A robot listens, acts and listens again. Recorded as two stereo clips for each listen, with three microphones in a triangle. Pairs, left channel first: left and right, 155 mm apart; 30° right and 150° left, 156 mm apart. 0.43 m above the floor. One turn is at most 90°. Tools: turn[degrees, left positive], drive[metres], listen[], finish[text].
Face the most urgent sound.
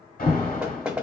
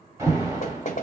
Thought: The alarm: 80° left.
Action: turn[80]
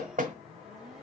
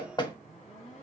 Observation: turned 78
Action: listen[]
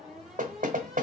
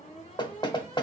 Action: finish[Found it: an alarm, straight ahead.]